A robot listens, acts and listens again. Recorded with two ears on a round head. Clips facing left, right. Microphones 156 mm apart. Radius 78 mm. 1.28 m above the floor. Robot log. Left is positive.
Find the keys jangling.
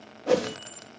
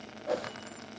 note: The keys jangling: about 45° left or 135° left.
cmd yaw +45
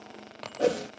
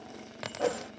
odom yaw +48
end: Found it: keys jangling, straight ahead.